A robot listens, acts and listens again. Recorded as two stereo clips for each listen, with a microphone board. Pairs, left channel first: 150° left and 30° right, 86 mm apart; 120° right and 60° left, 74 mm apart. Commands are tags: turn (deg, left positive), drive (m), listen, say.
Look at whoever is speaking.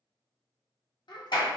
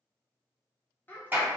<turn deg="175"/>
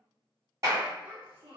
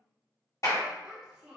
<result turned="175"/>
<turn deg="-20"/>
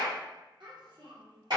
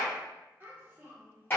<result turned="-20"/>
<say>Facing the child speaking, under 1 m away.</say>